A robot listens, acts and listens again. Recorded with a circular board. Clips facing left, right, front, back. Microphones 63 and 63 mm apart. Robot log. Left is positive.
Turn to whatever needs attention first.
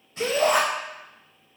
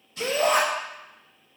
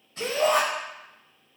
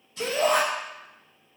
note: The shout: 165° left.
cmd yaw +165
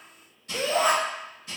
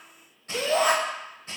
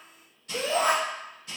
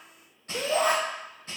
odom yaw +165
note: The shout is now 10° right.
cmd yaw -10
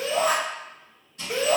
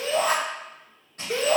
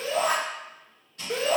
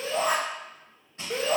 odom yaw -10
end: Facing the shout.